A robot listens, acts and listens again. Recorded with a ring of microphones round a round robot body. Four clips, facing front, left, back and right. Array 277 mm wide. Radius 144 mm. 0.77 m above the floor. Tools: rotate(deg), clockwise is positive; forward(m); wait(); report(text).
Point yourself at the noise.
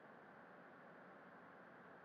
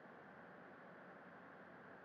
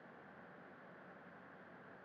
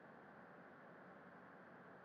wait()
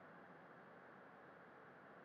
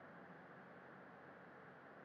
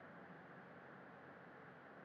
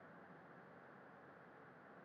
wait()
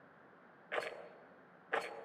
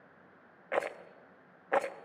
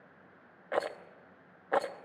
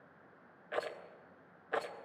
rotate(-140)
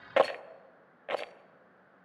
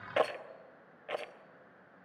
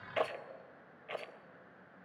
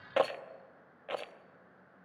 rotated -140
report("Found it: a rattle, straight ahead, 1 to 2 m away.")